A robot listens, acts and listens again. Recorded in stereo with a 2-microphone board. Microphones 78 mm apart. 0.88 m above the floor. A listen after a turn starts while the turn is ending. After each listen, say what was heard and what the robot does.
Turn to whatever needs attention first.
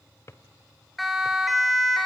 Turn 30° left.
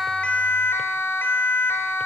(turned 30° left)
So it is at 150° left. Turn 150° left.
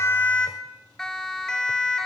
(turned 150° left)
The siren is now 10° left. Turn 10° left.
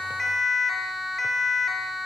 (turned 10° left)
Found it: a siren, straight ahead.